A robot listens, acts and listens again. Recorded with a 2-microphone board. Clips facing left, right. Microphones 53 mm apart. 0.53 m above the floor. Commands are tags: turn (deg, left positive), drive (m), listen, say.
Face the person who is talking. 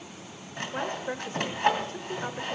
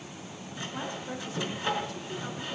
<turn deg="40"/>
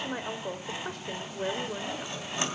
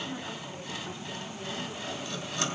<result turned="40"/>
<turn deg="100"/>
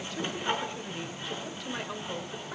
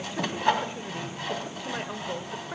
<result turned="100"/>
<turn deg="-15"/>
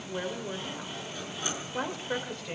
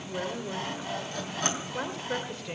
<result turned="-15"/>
<say>Found it: a woman speaking, straight ahead, 1 to 2 m away.</say>